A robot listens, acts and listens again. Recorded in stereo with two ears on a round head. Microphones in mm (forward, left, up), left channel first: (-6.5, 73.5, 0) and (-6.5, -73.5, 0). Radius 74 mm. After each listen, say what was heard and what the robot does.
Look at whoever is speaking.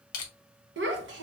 The child speaking: about 75° right or 105° right. Turn 75° right.
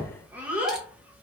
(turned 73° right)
So it is at 10° right. Turn 10° right.
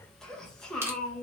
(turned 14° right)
Facing the child speaking, under 1 m away.